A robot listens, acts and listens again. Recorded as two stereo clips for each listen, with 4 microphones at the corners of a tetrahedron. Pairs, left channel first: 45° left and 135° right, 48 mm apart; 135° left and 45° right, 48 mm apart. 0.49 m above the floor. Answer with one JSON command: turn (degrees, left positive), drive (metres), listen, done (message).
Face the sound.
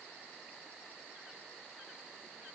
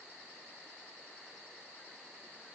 {"listen": true}
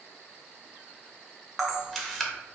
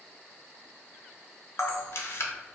{"turn": 130}
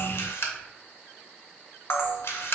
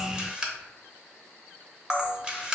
{"turn": 25}
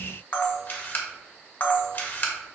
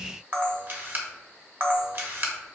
{"done": "Found it: a camera shutter, straight ahead, under 1 m away."}